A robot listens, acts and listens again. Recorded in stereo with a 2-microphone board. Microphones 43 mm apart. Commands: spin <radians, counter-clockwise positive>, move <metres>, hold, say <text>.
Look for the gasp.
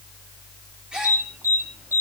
spin -0.35
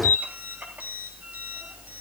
hold
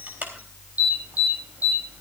say I heard a gasp, but can't make it out now. It was about straight ahead or 140° right.